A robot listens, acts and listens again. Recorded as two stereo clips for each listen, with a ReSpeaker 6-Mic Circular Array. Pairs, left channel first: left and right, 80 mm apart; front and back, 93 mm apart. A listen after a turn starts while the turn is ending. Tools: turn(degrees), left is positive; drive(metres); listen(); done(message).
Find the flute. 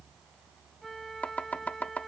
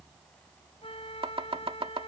done("Found it: a flute, straight ahead.")